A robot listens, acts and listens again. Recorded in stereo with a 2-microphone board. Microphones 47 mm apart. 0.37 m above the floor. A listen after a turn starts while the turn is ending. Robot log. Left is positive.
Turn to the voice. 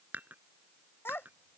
note: The child speaking: about 55° left or 125° left.
cmd yaw +55
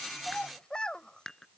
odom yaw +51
note: So it is at 20° left.
cmd yaw +20
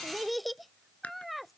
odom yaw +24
end: Facing the child speaking.